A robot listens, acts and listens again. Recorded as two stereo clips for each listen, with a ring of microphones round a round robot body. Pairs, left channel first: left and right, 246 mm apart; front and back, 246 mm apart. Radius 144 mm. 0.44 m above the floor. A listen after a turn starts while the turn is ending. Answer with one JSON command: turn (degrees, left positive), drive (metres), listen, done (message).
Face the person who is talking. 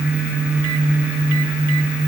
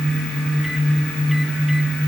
{"listen": true}
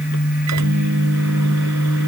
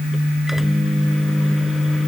{"listen": true}
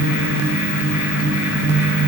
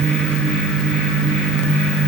{"done": "I can't make out anyone speaking."}